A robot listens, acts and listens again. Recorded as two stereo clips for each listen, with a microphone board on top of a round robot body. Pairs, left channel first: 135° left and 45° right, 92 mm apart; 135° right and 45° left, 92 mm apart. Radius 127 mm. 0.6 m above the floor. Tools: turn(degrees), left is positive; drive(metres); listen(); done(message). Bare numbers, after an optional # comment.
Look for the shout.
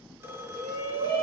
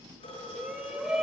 # The shout: 40° right.
turn(-40)
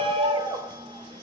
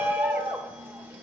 # The shout is now 25° right.
turn(-25)
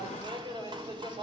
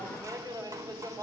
# The shout is now 10° right.
turn(-10)
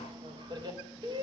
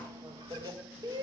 done("Facing the shout.")